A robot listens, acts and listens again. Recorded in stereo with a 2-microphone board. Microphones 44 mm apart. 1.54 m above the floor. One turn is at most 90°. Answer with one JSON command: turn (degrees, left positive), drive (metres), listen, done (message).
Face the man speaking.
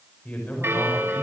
{"turn": 30}
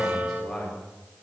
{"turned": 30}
{"done": "Facing the man speaking, over 4 m away."}